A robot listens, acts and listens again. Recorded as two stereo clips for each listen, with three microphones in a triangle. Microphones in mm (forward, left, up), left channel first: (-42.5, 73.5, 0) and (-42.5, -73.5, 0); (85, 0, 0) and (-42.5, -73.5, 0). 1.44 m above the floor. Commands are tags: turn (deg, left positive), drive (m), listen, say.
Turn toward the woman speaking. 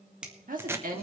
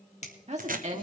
<turn deg="-115"/>
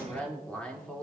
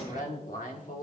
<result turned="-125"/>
<say>Facing the woman speaking, 2 to 4 m away.</say>